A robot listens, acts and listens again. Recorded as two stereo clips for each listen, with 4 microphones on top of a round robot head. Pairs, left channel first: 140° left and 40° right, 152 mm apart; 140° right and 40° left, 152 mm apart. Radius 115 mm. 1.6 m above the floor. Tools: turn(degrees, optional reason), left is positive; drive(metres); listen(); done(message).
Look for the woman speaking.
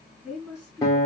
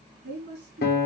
turn(degrees=40, reason="The woman speaking: 40° left.")
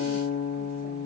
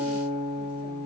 listen()
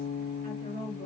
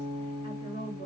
turn(degrees=-20, reason="The woman speaking is now 20° right.")
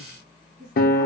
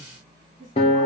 done("Found it: a woman speaking, straight ahead.")